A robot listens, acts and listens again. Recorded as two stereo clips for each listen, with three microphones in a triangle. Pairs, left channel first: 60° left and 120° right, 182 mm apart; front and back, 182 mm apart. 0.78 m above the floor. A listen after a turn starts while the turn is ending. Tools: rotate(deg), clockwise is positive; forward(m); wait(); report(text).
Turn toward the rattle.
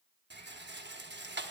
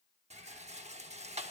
rotate(130)
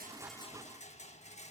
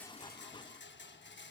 report("Found it: a rattle, straight ahead, under 1 m away.")